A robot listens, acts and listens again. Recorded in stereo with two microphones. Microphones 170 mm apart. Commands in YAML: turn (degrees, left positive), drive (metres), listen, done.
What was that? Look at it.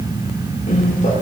turn: 45
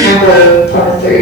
turn: 85
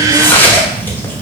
turn: 10
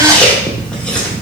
done: "Found it: chewing, straight ahead."